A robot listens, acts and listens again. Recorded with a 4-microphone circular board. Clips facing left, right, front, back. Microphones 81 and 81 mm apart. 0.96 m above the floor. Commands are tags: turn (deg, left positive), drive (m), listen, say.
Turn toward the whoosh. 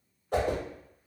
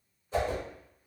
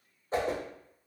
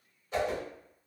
<turn deg="60"/>
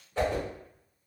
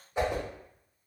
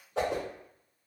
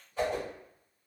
<turn deg="-15"/>
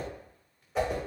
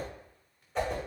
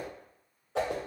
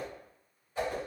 <say>Facing the whoosh.</say>